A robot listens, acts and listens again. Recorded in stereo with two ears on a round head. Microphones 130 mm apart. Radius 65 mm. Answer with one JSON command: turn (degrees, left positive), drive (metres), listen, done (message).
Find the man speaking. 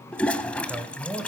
{"turn": -30}
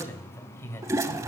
{"turn": 20}
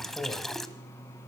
{"done": "Facing the man speaking."}